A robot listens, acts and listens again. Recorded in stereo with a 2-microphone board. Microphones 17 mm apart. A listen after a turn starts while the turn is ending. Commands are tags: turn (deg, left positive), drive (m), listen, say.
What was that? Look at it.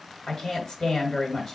<turn deg="40"/>
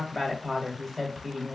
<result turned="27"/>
<turn deg="15"/>
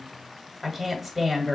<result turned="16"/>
<say>Facing the woman speaking.</say>